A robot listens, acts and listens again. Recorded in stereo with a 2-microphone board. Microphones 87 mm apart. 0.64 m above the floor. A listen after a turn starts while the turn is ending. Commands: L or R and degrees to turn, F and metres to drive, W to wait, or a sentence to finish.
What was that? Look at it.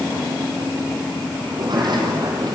R55
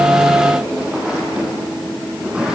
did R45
R10
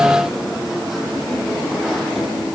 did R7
W
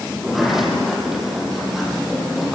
Found it: a sliding door, straight ahead.